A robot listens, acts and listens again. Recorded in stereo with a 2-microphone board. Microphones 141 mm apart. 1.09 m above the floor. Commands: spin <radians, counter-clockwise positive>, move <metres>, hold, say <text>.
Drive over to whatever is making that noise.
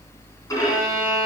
spin 0.44
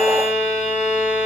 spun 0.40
spin 2.27
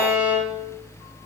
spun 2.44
spin -0.17
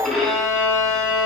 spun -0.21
move 1.0
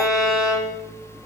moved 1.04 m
move 1.0
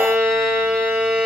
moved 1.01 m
move 1.0
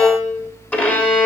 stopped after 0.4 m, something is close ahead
spin 0.17
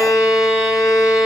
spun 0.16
say I am next to the violin.